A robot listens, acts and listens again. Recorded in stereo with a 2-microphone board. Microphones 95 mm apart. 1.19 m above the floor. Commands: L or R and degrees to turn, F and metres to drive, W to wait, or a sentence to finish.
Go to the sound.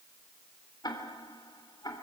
L45
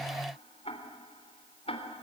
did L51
L85
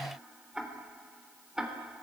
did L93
F1.0
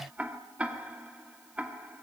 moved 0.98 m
R15
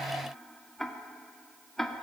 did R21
F1.0
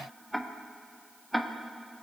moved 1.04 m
F1.0
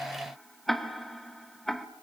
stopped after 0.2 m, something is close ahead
I am next to the ticking.